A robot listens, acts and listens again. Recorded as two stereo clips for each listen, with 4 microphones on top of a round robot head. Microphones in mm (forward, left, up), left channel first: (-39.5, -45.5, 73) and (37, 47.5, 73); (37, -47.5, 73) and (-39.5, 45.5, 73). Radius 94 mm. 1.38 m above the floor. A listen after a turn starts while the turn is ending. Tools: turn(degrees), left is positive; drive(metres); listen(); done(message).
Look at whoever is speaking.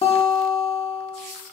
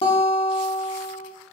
listen()
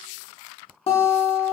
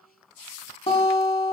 listen()
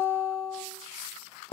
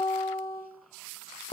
done("I can't make out anyone speaking, only a guitar.")